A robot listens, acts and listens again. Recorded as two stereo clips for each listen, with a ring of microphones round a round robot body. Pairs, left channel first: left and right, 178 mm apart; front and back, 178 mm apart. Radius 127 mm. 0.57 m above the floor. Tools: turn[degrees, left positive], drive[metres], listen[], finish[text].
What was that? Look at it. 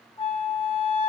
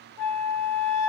Thought: The flute: 135° left.
Action: turn[135]
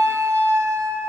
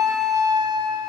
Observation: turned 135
Thought: The flute is now 15° right.
Action: turn[-15]
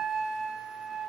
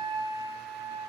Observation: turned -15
Action: finish[Facing the flute, 2 to 4 m away.]